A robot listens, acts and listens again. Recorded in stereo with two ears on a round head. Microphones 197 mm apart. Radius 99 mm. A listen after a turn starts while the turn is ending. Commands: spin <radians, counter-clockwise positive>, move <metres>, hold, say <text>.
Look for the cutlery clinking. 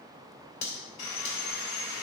spin 0.79
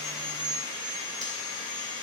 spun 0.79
hold
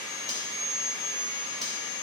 hold
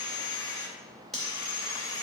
say Found it: cutlery clinking, straight ahead, 2 to 4 m away.